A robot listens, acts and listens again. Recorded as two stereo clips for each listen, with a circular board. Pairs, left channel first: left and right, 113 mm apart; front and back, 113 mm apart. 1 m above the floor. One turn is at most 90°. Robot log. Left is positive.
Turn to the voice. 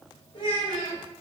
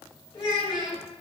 note: The child speaking: 45° left.
cmd yaw +45
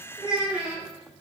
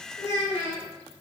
note: The child speaking is now 10° right.
cmd yaw -10
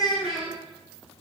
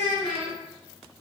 end: Facing the child speaking, 1 to 2 m away.